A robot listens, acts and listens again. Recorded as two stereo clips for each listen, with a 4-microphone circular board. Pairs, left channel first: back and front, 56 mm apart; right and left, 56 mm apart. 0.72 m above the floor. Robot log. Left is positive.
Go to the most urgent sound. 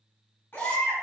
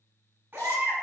note: The baby crying: 130° left.
cmd yaw +130
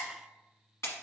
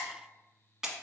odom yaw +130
cmd idle
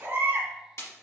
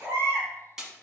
note: The baby crying is now 45° left.
cmd yaw +45
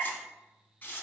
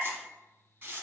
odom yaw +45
cmd idle
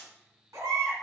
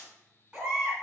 note: The baby crying is now 10° left.
cmd yaw +10
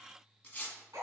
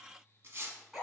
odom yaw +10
cmd fwd 1.0
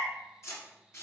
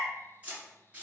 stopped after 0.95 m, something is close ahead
cmd idle
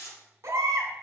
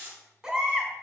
end: Arrived at the baby crying, straight ahead.